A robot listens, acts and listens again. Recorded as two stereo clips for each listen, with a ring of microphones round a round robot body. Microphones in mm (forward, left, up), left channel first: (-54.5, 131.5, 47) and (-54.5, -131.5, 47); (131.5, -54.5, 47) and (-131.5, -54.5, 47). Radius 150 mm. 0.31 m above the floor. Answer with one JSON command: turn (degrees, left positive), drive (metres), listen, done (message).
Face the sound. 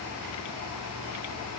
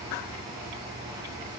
{"listen": true}
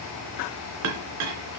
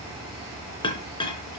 {"turn": -70}
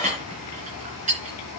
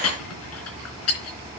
{"turn": -25}
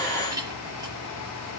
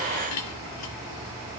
{"turn": -15}
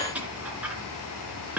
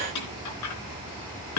{"done": "Found it: a clink, straight ahead."}